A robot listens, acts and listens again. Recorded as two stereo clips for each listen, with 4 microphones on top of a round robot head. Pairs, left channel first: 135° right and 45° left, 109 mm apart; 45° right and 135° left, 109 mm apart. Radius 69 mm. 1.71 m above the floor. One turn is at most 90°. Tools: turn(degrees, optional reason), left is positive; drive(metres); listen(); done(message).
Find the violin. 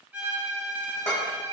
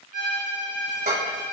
turn(degrees=90, reason="The violin: 125° left.")
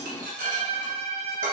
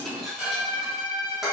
turn(degrees=10, reason="The violin is now 10° left.")
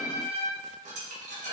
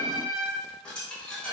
done("Facing the violin, 1 to 2 m away.")